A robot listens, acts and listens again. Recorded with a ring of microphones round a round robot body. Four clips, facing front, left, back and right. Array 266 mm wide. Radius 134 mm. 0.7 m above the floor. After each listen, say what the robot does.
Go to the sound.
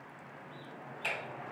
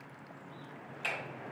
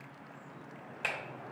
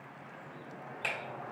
Turn 155° right.
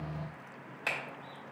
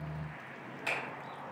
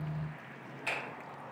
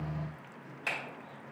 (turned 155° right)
Drive 1.0 m forward.
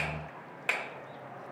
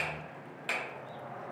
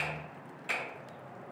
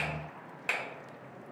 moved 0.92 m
Turn 10° right.
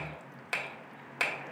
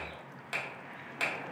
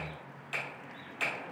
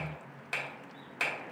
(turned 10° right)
Drive 1.0 m forward.
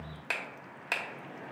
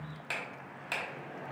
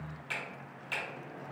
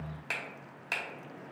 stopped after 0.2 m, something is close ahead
I am next to the finger snap.